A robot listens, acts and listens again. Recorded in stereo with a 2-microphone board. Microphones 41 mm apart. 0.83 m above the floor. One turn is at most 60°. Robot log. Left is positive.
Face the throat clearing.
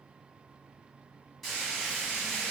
cmd idle
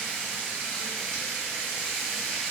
cmd idle
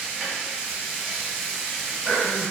note: The throat clearing: about 40° left or 140° left.
cmd yaw +40
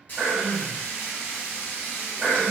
end: Facing the throat clearing.